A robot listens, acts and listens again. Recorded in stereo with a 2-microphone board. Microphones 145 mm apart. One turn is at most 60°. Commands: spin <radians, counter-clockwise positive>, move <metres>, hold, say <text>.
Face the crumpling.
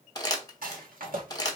spin 0.44
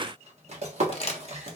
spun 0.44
spin 1.05
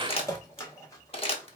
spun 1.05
spin 0.96
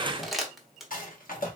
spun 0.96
say Found it: crumpling, straight ahead, 1 to 2 m away.